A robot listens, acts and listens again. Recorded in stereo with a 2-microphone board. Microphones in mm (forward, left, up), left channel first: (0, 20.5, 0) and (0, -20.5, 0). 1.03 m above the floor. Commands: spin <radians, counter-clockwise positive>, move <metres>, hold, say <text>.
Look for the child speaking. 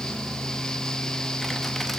hold
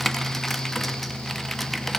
hold
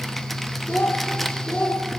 spin 1.57
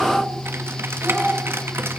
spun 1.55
hold
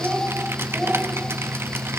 hold
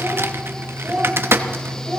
say Found it: a child speaking, straight ahead.